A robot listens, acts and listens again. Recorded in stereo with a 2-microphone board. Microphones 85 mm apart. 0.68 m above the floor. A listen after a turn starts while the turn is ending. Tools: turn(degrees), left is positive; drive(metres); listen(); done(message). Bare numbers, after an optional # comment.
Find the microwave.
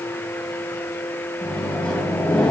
turn(30)
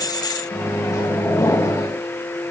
# So it is at 140° left.
turn(140)
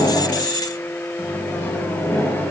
# The microwave is now 20° left.
turn(20)
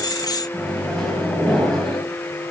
done("Found it: a microwave, straight ahead, over 4 m away.")